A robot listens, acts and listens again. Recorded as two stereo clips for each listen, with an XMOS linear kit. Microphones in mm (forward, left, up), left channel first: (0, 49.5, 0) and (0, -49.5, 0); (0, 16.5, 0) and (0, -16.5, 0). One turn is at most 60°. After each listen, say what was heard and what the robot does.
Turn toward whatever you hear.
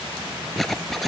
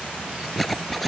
Turn 30° left.
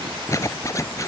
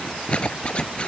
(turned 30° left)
So it is at 145° left. Turn 60° left.
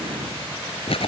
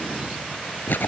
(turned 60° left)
The zipper is now 80° left. Turn 60° left.
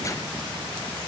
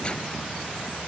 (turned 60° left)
Nothing new. It was at 20° left. Turn 20° left.
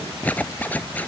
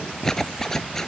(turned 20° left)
The zipper is now 15° left. Turn 15° left.
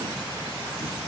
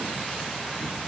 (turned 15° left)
Keep listening.
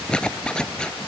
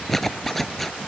The zipper is now 10° left. Turn 10° left.
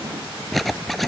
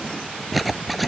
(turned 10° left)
Facing the zipper.